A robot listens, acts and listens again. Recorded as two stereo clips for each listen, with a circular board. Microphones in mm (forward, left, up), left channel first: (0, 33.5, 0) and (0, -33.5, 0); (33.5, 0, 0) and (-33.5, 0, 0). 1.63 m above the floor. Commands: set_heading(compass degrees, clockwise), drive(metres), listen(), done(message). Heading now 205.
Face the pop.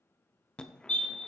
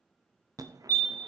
listen()
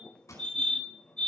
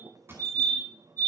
set_heading(80)
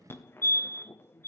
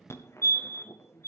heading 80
done("I heard a pop from this way, but can't make it out now.")